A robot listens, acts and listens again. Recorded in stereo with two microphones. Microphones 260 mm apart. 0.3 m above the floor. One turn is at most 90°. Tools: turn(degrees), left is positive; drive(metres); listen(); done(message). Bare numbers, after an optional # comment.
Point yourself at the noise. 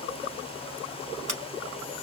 turn(-90)
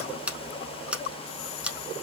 done("Found it: scissors, straight ahead, under 1 m away.")